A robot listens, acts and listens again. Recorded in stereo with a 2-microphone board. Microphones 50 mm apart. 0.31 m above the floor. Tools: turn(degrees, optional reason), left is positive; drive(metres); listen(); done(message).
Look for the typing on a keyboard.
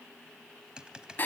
turn(degrees=-15, reason="The typing on a keyboard: about 15° right or 165° right.")
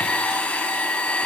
listen()
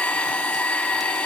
listen()
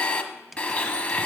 done("I heard typing on a keyboard, but can't make it out now. It was about straight ahead or 150° right.")